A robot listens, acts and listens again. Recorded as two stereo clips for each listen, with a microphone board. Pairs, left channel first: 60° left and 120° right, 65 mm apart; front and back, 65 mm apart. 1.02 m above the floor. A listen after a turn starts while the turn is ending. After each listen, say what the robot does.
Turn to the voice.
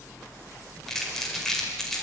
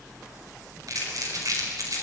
Keep listening.
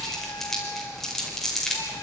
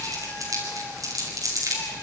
Keep listening.
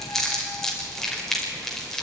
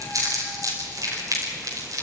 I can't make out anyone speaking, only crumpling.